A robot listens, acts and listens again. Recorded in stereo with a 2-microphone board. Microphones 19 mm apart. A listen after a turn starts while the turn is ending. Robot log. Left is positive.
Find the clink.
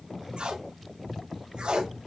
cmd idle
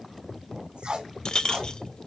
note: The clink: about 50° left or 130° left.
cmd yaw +50
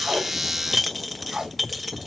end: Found it: a clink, straight ahead.